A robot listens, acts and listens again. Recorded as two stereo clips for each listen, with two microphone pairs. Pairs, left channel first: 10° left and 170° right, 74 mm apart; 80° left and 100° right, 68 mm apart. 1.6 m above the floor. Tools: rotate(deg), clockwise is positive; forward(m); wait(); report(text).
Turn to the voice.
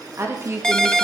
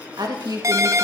rotate(115)
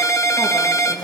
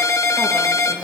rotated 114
report("Facing the woman speaking, 2 to 4 m away.")